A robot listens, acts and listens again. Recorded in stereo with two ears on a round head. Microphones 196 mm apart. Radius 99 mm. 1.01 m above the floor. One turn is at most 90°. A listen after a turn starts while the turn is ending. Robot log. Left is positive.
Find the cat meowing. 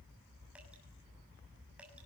cmd idle
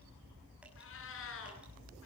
note: The cat meowing: about 65° left or 115° left.
cmd yaw +65
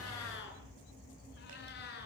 note: So it is at 45° left.
cmd yaw +45
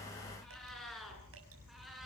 end: Found it: a cat meowing, straight ahead, over 4 m away.